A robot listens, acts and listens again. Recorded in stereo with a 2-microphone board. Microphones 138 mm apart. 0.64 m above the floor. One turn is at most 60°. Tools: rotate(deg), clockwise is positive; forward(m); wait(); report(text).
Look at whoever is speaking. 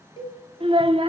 rotate(40)
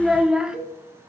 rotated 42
report("Facing the child speaking.")